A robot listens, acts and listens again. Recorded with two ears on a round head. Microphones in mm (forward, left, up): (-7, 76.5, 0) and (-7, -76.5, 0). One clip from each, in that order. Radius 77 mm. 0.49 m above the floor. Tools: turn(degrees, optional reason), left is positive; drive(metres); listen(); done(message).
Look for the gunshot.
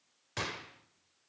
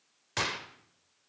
turn(degrees=-25, reason="The gunshot: about 25° right or 155° right.")
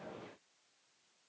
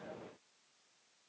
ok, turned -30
listen()
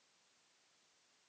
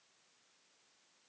done("I heard a gunshot, but can't make it out now. It was about 5° left or 125° right.")